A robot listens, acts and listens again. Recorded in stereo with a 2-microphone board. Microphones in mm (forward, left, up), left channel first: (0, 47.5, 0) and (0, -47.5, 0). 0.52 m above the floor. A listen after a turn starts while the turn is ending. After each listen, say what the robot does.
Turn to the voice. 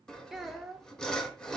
Turn 30° right.
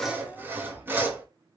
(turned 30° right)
Keep listening.
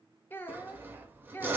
Turn 25° left.
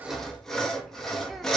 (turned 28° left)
Keep listening.
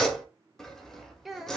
Facing the child speaking.